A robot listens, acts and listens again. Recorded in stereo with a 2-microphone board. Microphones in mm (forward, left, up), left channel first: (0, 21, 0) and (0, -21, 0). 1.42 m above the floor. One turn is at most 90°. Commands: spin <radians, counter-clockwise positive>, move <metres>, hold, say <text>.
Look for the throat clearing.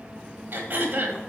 spin -0.96
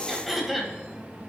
say Found it: throat clearing, straight ahead, 1 to 2 m away.